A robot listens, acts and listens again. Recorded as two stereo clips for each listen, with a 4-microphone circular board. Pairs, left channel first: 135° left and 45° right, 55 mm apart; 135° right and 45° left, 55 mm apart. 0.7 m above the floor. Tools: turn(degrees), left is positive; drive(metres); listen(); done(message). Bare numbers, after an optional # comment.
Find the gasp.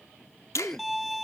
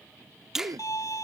# The gasp: 55° left.
turn(55)
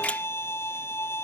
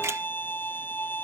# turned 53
done("I heard a gasp from this way, but can't make it out now.")